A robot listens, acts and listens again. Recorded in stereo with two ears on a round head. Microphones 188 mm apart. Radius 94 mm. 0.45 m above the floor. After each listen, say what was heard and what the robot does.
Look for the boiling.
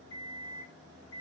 Keep listening.
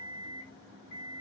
Keep listening.
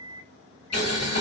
The boiling: about 55° left or 125° left. Turn 55° left.
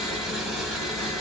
Found it: boiling, straight ahead.